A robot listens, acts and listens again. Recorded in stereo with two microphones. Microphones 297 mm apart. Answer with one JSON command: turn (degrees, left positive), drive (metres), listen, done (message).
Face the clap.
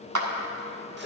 {"turn": -90}
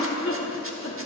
{"listen": true}
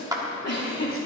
{"turn": -10}
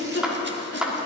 {"done": "Found it: a clap, straight ahead, 1 to 2 m away."}